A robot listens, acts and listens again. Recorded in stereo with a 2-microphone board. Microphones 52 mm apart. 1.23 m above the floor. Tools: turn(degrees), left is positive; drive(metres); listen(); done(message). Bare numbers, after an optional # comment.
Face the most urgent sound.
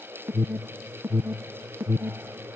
# The alarm: about 45° right or 135° right.
turn(-45)
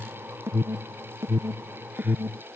# So it is at 80° right.
turn(-80)
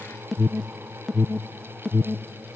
done("Facing the alarm.")